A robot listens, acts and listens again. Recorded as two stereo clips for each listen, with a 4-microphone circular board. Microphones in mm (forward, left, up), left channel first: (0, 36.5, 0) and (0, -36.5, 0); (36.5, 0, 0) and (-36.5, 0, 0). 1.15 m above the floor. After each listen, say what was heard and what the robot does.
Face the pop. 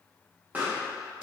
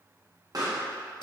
The pop: 155° right. Turn 155° right.
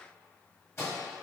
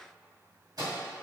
Facing where the pop came from. I can't hear it now.